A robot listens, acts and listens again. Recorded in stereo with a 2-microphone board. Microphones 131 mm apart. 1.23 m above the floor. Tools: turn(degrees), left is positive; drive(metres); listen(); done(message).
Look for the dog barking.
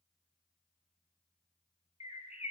listen()
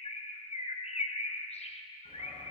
turn(degrees=45)
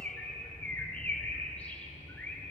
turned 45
turn(degrees=90)
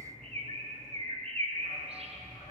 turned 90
turn(degrees=30)
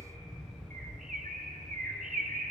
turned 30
done("Found it: a dog barking, straight ahead, over 4 m away.")